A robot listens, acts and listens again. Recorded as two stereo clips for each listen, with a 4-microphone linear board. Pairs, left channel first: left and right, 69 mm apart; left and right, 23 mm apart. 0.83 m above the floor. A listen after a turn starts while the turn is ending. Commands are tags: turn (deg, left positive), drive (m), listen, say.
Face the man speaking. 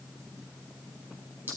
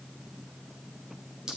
<listen/>
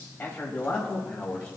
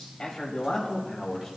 <turn deg="15"/>
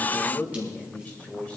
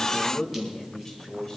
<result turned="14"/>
<turn deg="20"/>
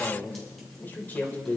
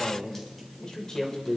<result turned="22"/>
<turn deg="20"/>
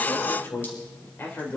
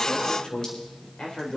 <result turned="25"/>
<turn deg="30"/>
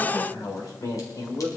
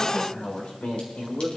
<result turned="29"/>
<turn deg="120"/>
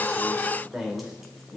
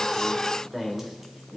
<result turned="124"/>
<say>Facing the man speaking, 2 to 4 m away.</say>